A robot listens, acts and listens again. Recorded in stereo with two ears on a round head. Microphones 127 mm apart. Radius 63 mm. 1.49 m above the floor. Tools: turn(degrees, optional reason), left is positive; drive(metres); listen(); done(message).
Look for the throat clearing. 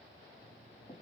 listen()
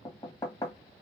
listen()
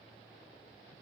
done("I can't make out throat clearing to turn to.")